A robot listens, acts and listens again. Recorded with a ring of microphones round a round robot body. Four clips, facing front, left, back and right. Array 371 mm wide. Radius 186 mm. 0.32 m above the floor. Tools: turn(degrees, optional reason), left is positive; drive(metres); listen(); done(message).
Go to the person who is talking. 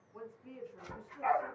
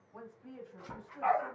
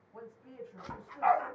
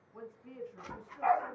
turn(degrees=130, reason="The woman speaking: 130° left.")
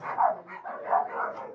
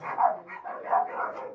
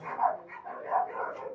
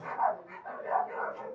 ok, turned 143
turn(degrees=-10, reason="Nothing new. It was at 10° right.")
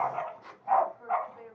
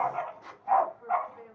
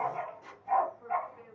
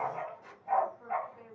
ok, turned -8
drive(metres=1.0)
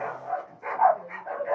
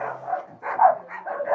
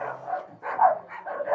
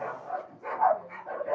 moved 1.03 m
listen()
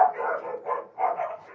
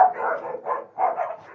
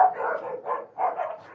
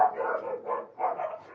listen()
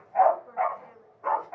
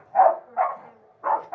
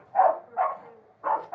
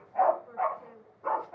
drive(metres=1.0)
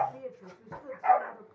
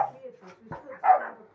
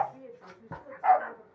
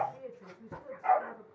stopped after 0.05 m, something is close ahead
done("I am next to the woman speaking.")